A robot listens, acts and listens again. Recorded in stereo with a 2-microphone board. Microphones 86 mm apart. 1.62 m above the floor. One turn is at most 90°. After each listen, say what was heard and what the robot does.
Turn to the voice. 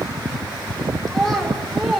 Turn 30° left.
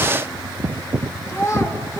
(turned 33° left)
So it is at 145° left. Turn 90° left.
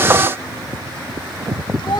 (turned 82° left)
Nothing new. It was at 65° left. Turn 65° left.
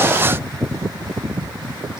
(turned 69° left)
Keep listening.
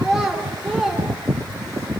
Facing the child speaking, over 4 m away.